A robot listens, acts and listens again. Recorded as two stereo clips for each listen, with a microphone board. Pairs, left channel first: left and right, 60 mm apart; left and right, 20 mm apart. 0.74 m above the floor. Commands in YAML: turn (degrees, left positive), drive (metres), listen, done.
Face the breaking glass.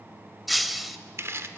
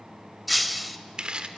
turn: 30
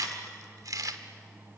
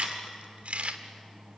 listen: true
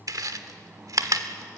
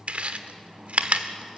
done: "I heard breaking glass, but can't make it out now. It was about 30° right or 150° left."